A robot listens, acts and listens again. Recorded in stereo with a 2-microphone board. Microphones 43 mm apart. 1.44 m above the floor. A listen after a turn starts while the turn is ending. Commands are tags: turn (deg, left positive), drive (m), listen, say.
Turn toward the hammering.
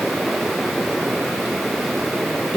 <listen/>
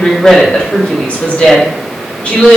<listen/>
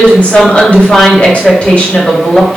<say>I can't make out hammering to turn to.</say>